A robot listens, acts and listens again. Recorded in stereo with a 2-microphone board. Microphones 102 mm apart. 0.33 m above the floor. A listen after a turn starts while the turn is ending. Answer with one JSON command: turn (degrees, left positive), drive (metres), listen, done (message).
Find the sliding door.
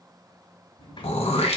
{"turn": 55}
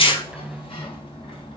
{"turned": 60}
{"turn": 65}
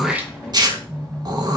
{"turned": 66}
{"done": "Facing the sliding door, 1 to 2 m away."}